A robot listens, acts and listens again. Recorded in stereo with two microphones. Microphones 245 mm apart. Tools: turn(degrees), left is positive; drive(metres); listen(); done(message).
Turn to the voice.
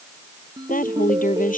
turn(degrees=35)
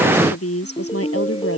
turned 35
turn(degrees=115)
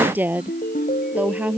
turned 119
done("Found it: a woman speaking, straight ahead.")